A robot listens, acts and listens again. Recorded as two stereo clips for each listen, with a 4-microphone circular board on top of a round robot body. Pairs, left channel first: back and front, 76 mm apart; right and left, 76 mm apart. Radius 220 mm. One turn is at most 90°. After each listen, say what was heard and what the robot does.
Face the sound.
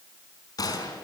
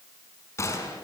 The gunshot: 145° right. Turn 90° right.
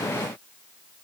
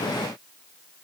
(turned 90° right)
Nothing new. It was at 55° right. Turn 55° right.
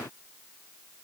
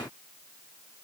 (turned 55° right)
Facing where the gunshot came from. I can't hear it now.